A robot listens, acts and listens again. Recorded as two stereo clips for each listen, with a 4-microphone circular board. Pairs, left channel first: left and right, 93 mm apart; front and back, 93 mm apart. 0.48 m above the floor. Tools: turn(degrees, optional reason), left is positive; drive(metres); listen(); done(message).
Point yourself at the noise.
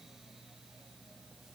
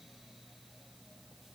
listen()
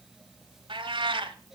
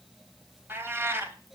turn(degrees=-115, reason="The cat meowing: 115° right.")
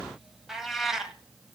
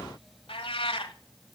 done("Facing the cat meowing.")